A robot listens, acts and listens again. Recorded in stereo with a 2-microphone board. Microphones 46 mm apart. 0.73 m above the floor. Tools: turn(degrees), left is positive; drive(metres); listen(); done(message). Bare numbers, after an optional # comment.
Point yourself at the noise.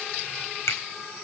turn(90)
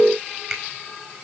done("Facing the finger snap.")